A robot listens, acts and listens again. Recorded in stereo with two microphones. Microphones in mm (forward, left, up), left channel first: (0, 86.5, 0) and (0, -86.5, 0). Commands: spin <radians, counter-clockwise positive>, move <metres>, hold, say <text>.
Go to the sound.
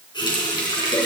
spin 0.52
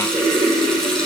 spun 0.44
move 1.0
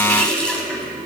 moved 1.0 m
move 1.0
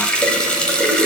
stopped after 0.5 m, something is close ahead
say I am next to the running tap.